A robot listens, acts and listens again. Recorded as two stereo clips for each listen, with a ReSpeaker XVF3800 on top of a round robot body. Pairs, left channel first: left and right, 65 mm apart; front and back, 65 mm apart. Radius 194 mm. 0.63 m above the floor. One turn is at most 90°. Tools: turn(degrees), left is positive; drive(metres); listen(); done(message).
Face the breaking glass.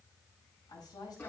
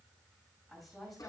listen()
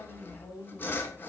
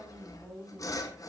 listen()
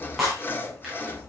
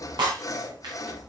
turn(degrees=90)
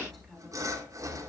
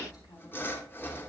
turn(degrees=90)
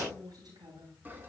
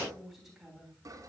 done("Facing where the breaking glass came from. I can't hear it now.")